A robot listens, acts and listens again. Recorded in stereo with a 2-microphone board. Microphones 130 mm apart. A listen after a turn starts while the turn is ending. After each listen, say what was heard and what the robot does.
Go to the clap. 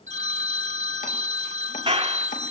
The clap: about 45° right or 135° right. Turn 45° right.
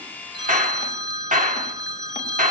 So it is at 90° right. Turn 90° right.
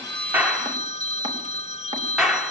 Drive 1.0 m forward.
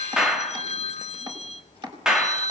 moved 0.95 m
Drive 1.0 m forward.
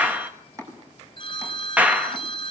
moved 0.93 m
The clap is now 10° right. Turn 10° right.
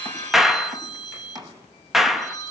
Drive 1.0 m forward.
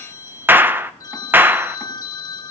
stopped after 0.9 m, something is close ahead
The clap is now 15° right. Turn 15° right.
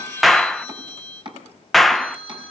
Arrived at the clap, straight ahead.